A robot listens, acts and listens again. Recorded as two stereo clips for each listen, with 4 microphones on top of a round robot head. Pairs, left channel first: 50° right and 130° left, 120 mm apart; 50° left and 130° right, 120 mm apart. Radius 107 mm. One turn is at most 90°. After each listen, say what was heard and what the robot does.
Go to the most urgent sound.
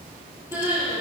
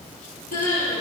The crying: 55° left. Turn 55° left.
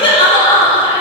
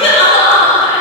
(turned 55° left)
Drive 1.0 m forward.
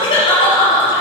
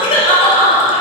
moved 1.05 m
Drive 1.0 m forward.
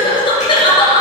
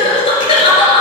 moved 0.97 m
Drive 1.0 m forward.
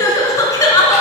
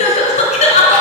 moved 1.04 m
The crying is now 15° left. Turn 15° left.
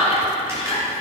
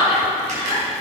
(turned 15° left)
Drive 1.0 m forward.
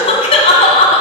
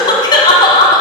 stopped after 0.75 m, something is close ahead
I am next to the crying.